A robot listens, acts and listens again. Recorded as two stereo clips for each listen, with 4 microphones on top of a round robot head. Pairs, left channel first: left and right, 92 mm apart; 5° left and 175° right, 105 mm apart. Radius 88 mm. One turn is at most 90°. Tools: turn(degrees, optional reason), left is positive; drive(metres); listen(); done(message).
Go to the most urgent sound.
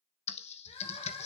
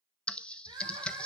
turn(degrees=90, reason="The crying: 140° left.")
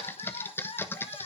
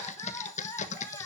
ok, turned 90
turn(degrees=70, reason="The crying is now 70° left.")
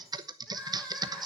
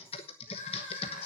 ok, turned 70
turn(degrees=10, reason="The crying is now 10° left.")
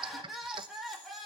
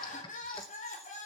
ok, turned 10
drive(metres=1.0)
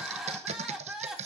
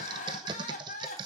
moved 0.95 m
drive(metres=1.0)
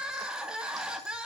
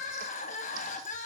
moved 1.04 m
turn(degrees=-10, reason="The crying is now 10° right.")
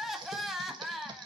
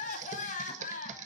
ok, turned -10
drive(metres=1.0)
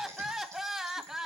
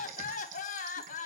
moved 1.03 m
drive(metres=1.0)
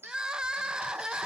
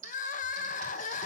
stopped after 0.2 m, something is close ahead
turn(degrees=-10, reason="The crying is now 10° right.")
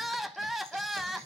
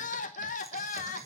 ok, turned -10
done("Arrived at the crying, straight ahead.")